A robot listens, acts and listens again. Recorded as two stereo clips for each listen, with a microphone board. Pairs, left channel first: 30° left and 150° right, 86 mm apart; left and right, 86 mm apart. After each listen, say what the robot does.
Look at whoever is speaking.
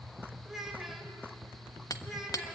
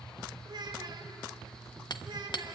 Turn 60° right.
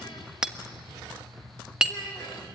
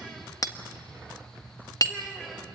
Keep listening.
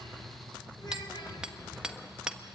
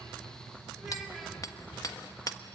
Keep listening.
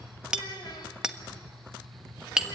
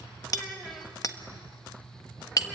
Facing the child speaking, 2 to 4 m away.